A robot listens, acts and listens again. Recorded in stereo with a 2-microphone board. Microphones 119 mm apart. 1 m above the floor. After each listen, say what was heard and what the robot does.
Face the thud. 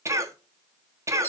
Keep listening.
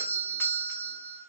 Keep listening.
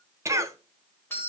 I can't make out a thud to turn to.